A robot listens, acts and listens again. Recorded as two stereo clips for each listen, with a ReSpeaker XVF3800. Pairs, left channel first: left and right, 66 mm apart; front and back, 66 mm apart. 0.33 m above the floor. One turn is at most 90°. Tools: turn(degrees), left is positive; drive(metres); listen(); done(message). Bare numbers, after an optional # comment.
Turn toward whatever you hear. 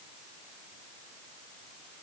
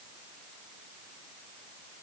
listen()
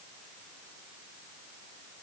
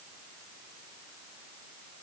listen()
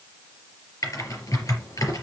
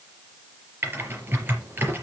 # The typing on a keyboard: 125° left.
turn(90)
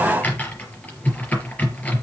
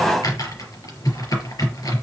# The typing on a keyboard is now 25° left.
turn(25)
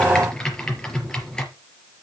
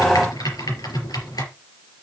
# The typing on a keyboard is now 10° left.
turn(10)
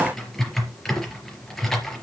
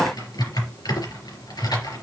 done("Facing the typing on a keyboard.")